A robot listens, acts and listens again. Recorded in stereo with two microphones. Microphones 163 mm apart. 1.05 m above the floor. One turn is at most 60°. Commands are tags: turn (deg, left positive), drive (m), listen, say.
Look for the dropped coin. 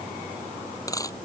<turn deg="20"/>
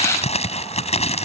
<listen/>
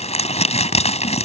<say>I heard a dropped coin, but can't make it out now. It was about straight ahead or 140° left.</say>